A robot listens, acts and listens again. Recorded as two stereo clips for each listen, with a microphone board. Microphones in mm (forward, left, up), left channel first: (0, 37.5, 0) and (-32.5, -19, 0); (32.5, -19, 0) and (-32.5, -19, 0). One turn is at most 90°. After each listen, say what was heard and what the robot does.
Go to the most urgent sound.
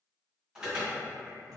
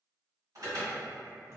The alarm: 160° left. Turn 90° left.
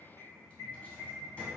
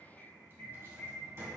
The alarm is now 70° left. Turn 70° left.
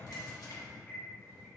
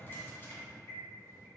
Keep listening.
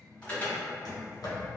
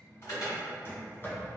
Drive 1.0 m forward.
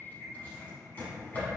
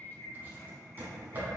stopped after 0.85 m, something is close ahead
The alarm is now 10° right. Turn 10° right.
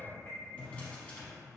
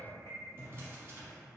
Keep listening.
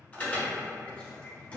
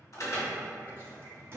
I am next to the alarm.